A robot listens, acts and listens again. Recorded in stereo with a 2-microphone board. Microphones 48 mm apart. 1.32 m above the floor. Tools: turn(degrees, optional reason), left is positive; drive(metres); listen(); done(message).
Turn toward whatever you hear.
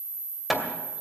turn(degrees=-30)
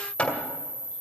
turn(degrees=25, reason="So it is at 25° left.")
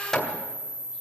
done("Found it: hammering, straight ahead, 2 to 4 m away.")